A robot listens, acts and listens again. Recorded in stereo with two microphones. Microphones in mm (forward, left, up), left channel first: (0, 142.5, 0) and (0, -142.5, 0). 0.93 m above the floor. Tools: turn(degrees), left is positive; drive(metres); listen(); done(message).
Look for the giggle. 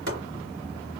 listen()
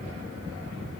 listen()
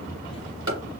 done("I can't make out a giggle to turn to.")